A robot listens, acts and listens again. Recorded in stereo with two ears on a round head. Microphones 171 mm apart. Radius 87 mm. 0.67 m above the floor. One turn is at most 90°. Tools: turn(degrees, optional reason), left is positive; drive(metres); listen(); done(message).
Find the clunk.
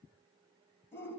listen()
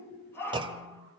turn(degrees=-25, reason="The clunk: about 25° right or 155° right.")
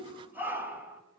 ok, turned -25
listen()
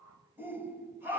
done("I heard a clunk, but can't make it out now. It was about straight ahead or 130° right.")